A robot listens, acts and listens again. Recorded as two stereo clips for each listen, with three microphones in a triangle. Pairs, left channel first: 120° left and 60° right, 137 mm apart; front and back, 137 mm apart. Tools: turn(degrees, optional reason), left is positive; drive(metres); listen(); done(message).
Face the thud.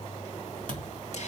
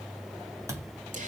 turn(degrees=110, reason="The thud: 110° left.")
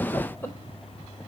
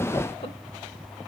done("Facing where the thud came from. I can't hear it now.")